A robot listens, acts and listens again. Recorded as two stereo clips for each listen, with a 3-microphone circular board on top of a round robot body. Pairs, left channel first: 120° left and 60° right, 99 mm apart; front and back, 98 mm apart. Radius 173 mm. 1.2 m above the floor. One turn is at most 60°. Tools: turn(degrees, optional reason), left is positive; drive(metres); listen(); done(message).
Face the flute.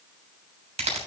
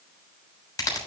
listen()
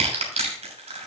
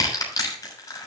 listen()
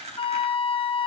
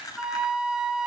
turn(degrees=60, reason="The flute: 95° left.")
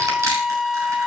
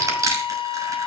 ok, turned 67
turn(degrees=30, reason="The flute is now 30° left.")
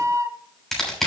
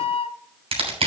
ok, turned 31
done("Found it: a flute, straight ahead, under 1 m away.")